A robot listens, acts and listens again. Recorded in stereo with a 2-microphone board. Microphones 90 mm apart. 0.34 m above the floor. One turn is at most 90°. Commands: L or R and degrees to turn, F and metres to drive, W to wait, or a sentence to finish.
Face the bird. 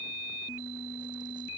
W
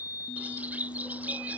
R15
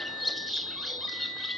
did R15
Facing the bird.